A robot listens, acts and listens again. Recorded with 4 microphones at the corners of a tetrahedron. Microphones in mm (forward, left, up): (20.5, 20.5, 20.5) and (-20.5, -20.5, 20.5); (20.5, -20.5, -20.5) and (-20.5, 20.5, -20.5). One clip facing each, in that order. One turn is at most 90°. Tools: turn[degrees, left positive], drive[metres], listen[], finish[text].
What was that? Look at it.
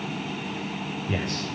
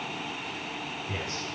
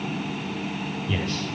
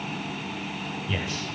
Thought: The man speaking: 55° left.
Action: turn[55]
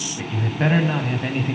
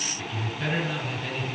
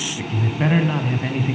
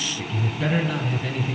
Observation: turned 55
Action: finish[Facing the man speaking, 2 to 4 m away.]